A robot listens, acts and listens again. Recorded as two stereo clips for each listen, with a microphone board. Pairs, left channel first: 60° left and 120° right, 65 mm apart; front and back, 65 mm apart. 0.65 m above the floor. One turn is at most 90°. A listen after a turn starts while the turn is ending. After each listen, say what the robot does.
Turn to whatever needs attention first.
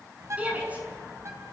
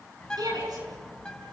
Turn 90° left.
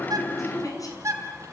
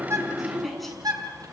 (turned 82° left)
Turn 90° left.
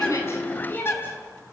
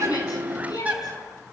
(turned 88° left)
Facing the shout, over 4 m away.